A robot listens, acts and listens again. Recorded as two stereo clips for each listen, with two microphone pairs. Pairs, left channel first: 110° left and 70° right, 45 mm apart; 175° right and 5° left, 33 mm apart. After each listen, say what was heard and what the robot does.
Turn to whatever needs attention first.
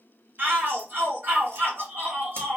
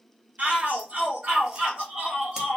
The shout: 30° right. Turn 30° right.
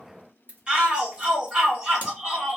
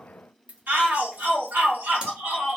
Found it: a shout, straight ahead, 1 to 2 m away.